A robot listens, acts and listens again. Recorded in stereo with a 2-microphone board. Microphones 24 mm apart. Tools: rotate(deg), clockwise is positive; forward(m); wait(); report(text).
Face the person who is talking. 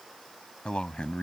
rotate(-55)
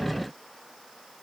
report("Facing the man speaking.")